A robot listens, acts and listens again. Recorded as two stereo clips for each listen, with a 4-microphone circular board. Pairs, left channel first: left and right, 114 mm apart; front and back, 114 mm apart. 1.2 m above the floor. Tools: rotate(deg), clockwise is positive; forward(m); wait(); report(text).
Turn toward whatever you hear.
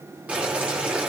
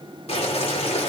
rotate(15)
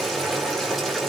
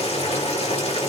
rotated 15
report("Facing the boiling, over 4 m away.")